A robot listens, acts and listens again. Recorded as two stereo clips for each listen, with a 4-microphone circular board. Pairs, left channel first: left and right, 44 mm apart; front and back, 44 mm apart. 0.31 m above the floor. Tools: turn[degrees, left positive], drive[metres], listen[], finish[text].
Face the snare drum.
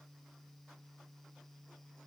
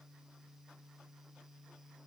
Action: listen[]
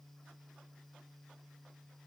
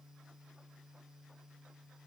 Action: listen[]
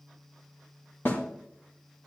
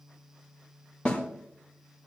Thought: The snare drum: 60° left.
Action: turn[60]
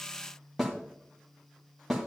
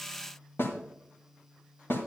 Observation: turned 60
Action: finish[Facing the snare drum, 1 to 2 m away.]